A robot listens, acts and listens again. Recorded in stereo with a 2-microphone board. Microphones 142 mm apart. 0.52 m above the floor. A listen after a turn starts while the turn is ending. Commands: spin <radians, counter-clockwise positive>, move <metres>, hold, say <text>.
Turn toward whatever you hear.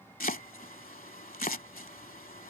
spin 1.57
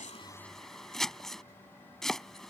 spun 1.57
say Found it: chopping, straight ahead.